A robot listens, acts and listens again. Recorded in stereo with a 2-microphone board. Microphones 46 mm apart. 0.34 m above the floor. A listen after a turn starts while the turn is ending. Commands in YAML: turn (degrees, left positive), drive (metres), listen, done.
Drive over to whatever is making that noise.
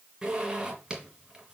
turn: -30
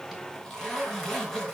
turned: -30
turn: 10
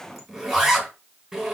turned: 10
drive: 1.0
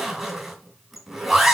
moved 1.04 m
drive: 1.0
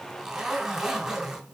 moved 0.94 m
turn: -10
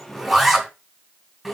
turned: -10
drive: 1.0
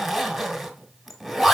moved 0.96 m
drive: 1.0
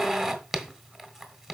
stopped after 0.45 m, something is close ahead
done: "I am next to the zipper."